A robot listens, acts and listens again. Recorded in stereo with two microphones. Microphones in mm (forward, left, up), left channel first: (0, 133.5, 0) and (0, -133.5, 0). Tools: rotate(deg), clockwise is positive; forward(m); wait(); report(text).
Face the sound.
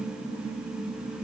wait()
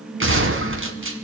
rotate(50)
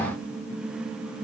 wait()
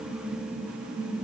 report("I heard a gunshot, but can't make it out now. It was about straight ahead or 80° right.")